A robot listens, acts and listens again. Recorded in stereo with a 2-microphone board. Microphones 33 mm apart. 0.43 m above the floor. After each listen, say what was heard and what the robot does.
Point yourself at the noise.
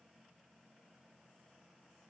Keep listening.
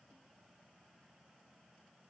Keep listening.
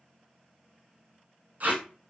The tape being pulled: about 60° right or 120° right. Turn 60° right.
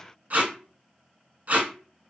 So it is at 55° right. Turn 55° right.
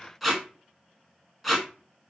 Facing the tape being pulled.